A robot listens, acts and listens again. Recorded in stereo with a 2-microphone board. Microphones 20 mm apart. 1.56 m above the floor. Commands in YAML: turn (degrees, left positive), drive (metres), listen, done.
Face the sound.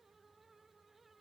listen: true
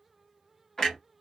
turn: 20
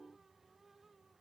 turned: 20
listen: true
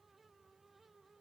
done: "I heard a clunk, but can't make it out now. It was about straight ahead or 140° left."